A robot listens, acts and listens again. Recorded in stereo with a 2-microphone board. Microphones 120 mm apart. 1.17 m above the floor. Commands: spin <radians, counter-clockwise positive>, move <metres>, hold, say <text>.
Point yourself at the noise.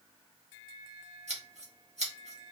spin -1.13
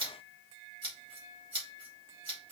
spin -0.79
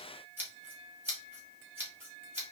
spin -0.26
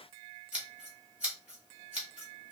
spin -0.17
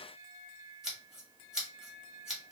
say Facing the scissors, 2 to 4 m away.